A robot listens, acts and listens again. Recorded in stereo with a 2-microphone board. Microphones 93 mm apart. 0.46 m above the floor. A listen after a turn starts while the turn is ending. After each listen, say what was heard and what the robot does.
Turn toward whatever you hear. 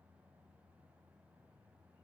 Keep listening.
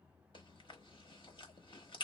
The chewing: about 60° left or 120° left. Turn 60° left.
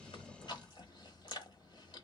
So it is at 55° left. Turn 55° left.
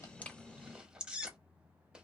The chewing is now 10° right. Turn 10° right.
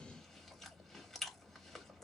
Facing the chewing.